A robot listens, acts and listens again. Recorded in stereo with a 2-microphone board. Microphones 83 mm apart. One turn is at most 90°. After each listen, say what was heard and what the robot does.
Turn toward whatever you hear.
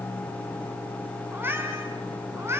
The cat meowing: about 30° right or 150° right. Turn 30° right.
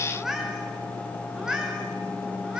So it is at 10° right. Turn 10° right.
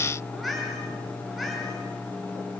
Keep listening.
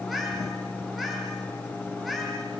Keep listening.
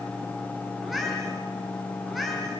Found it: a cat meowing, straight ahead.